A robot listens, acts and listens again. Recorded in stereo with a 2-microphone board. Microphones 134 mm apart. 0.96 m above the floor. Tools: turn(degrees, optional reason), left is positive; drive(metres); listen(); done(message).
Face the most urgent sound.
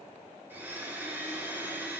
listen()
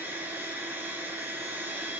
listen()
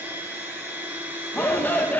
turn(degrees=30)
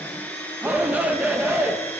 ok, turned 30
turn(degrees=-15, reason="So it is at 15° right.")
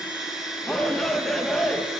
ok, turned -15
done("Facing the shout.")